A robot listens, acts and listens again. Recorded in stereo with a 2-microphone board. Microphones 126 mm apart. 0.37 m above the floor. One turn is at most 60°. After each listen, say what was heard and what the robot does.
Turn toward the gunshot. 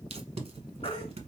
Keep listening.
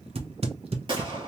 The gunshot: about 40° right or 140° right. Turn 40° right.
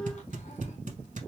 Keep listening.
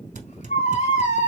I heard a gunshot, but can't make it out now. It was about straight ahead or 100° right.